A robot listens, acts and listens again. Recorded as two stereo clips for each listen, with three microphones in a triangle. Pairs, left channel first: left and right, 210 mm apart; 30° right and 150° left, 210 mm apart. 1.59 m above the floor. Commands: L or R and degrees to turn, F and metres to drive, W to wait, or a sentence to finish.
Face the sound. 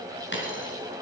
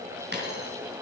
L115
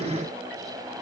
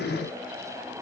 I heard a dropped coin from this way, but can't make it out now.